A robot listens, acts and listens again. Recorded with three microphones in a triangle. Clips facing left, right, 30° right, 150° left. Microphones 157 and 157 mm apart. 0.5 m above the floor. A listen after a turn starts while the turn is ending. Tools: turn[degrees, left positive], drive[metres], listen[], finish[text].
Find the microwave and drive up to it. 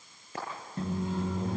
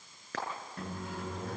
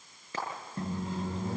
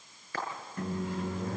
Thought: The microwave: 25° left.
Action: turn[25]
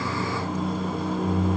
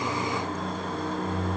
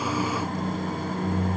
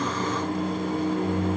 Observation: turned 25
Action: drive[1.0]
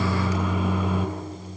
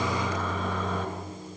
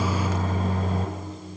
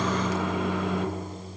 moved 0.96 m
Thought: The microwave is now 10° left.
Action: turn[10]
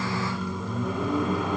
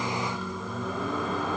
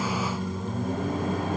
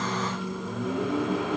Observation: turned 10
Action: drive[1.0]
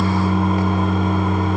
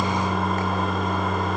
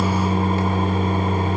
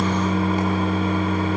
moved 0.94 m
Action: drive[1.0]
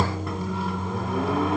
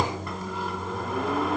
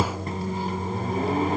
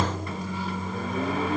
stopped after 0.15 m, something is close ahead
Action: finish[I am next to the microwave.]